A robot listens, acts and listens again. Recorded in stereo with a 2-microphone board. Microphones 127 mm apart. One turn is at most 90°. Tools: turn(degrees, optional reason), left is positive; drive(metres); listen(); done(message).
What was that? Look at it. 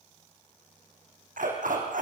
turn(degrees=-90)
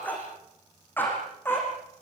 turn(degrees=15, reason="So it is at 15° left.")
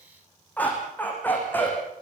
turn(degrees=15, reason="The dog barking is now 15° left.")
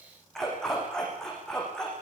done("Found it: a dog barking, straight ahead, over 4 m away.")